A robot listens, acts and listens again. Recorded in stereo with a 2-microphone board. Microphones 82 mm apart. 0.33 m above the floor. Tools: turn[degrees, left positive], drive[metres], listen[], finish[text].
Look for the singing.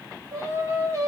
Thought: The singing: about 40° right or 140° right.
Action: turn[-40]
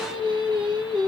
Thought: So it is at 100° right.
Action: turn[-100]
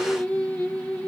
Thought: The singing is now 15° left.
Action: turn[15]
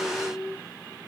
Action: finish[Facing the singing, 2 to 4 m away.]